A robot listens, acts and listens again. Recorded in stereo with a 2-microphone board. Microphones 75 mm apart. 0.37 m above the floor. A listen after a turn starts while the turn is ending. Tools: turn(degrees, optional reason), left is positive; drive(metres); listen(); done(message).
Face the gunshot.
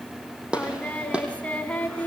turn(degrees=-30)
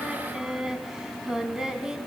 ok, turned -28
listen()
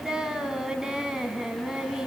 done("I heard a gunshot, but can't make it out now. It was about 15° left or 140° right.")